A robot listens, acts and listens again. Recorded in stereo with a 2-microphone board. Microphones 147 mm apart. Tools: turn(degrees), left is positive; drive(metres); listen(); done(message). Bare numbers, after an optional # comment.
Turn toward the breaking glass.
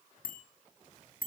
listen()
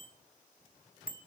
listen()
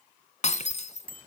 # The breaking glass: about 55° left or 125° left.
turn(55)
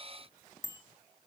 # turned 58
listen()
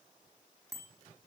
done("I heard breaking glass, but can't make it out now. It was about 5° right or 70° left.")